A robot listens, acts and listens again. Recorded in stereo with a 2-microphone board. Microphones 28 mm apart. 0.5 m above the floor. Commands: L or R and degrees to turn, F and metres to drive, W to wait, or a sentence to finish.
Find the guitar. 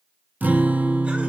R75
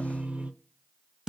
R20
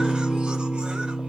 Facing the guitar.